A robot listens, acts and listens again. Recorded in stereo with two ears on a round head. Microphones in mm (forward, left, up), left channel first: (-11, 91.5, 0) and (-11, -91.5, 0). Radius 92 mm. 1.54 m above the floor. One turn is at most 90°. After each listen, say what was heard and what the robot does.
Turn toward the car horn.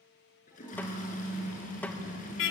The car horn: about 65° left or 115° left. Turn 65° left.
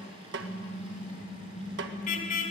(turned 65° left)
So it is at 40° left. Turn 40° left.
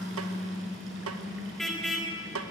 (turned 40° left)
Facing the car horn.